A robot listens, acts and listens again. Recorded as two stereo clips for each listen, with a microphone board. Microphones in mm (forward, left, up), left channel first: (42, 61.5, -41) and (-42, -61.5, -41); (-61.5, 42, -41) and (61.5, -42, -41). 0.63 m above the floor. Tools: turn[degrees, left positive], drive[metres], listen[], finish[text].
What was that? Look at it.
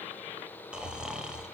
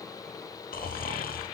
Thought: The snoring: 155° left.
Action: turn[155]
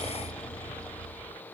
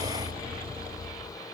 Thought: The snoring is now 25° right.
Action: turn[-25]
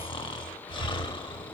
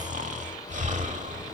Action: finish[Facing the snoring, under 1 m away.]